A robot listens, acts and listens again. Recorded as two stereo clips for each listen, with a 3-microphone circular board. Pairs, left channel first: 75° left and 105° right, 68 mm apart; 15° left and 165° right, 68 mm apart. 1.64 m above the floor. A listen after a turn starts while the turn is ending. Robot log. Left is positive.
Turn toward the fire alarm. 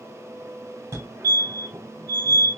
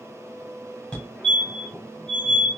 note: The fire alarm: 60° right.
cmd yaw -60
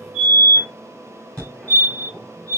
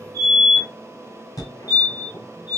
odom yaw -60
end: Facing the fire alarm, 1 to 2 m away.